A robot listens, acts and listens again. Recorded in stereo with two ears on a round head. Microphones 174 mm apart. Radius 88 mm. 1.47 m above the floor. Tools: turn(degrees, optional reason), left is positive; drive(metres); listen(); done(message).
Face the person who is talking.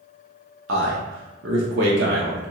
turn(degrees=-65, reason="The man speaking: about 65° right or 115° right.")
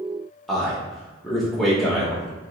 done("Found it: a man speaking, straight ahead.")